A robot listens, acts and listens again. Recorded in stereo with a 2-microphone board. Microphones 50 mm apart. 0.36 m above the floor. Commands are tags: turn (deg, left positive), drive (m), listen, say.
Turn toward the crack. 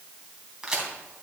<turn deg="-30"/>
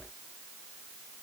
<listen/>
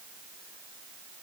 <say>I heard a crack, but can't make it out now. It was about 15° left or 135° right.</say>